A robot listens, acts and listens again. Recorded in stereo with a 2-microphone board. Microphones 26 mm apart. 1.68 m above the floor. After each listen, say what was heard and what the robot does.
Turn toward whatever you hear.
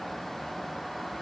Keep listening.
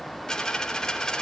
The dropped coin: about 30° left or 150° left. Turn 30° left.
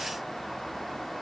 Keep listening.
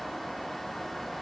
I heard a dropped coin, but can't make it out now. It was about straight ahead or 120° left.